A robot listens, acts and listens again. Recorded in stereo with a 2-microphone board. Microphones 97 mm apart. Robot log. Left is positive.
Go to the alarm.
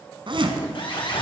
note: The alarm: about 60° left or 120° left.
cmd yaw +60
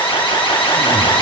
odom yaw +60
note: So it is at 60° left.
cmd yaw +60
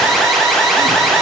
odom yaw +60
cmd fwd 1.0
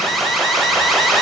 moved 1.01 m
cmd fwd 1.0
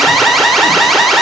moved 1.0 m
cmd fwd 1.0
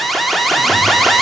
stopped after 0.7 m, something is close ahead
end: Arrived at the alarm, straight ahead.